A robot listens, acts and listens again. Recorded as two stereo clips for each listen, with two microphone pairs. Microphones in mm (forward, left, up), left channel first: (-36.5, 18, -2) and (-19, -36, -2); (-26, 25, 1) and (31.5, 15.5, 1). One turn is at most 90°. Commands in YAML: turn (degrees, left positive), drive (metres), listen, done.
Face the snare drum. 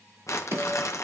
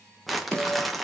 turn: -90
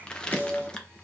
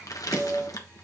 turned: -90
turn: -15
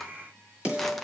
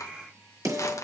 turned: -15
done: "Facing the snare drum."